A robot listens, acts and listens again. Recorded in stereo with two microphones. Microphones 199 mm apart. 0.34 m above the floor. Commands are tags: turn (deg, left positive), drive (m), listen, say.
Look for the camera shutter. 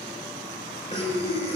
<listen/>
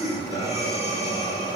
<listen/>
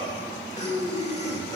<say>I can't make out a camera shutter, only breathing.</say>